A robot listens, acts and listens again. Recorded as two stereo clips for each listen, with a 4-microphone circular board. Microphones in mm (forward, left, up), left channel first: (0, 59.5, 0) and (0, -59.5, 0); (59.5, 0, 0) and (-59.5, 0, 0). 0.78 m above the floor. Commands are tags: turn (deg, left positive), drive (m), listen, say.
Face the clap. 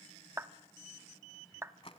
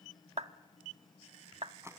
<turn deg="-155"/>
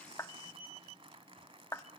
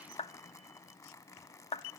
<turn deg="25"/>
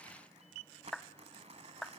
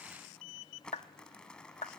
<say>Facing the clap.</say>